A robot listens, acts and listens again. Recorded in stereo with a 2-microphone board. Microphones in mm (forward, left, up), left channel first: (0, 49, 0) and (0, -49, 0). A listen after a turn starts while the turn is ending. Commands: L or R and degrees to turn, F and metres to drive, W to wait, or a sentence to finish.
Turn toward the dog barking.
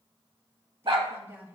R60
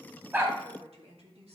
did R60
W
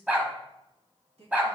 R15
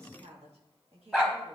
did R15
Facing the dog barking.